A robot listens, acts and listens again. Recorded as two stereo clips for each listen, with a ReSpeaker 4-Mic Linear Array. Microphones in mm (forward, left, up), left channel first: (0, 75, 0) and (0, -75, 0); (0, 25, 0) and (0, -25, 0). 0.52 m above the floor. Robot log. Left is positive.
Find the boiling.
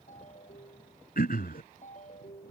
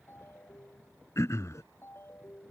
cmd idle
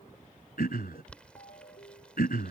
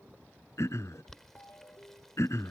cmd yaw +30
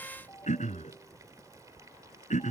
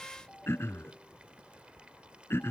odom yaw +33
note: So it is at 25° right.
cmd yaw -25
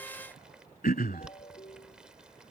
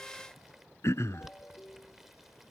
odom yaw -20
end: Found it: boiling, straight ahead.